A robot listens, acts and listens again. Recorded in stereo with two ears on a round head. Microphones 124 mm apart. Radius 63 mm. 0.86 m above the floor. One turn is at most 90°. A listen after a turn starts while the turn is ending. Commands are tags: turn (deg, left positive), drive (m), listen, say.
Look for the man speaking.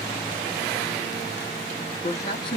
<turn deg="35"/>
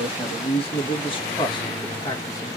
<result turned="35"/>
<turn deg="30"/>
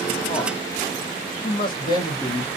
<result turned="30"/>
<turn deg="30"/>
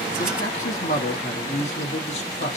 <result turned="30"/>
<turn deg="90"/>
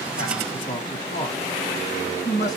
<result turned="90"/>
<turn deg="25"/>
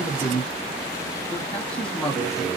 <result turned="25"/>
<say>Facing the man speaking.</say>